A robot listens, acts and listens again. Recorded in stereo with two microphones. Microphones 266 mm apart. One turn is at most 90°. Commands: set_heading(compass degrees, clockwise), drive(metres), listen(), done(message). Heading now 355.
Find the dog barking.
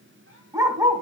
set_heading(25)
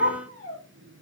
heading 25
set_heading(115)
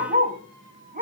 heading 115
set_heading(145)
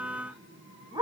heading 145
set_heading(160)
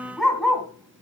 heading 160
done("Facing the dog barking.")